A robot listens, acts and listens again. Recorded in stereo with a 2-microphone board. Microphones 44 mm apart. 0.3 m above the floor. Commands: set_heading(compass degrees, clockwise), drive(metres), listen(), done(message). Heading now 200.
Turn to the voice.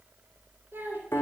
set_heading(260)
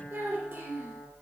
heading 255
set_heading(315)
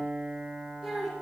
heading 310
done("Found it: a child speaking, straight ahead.")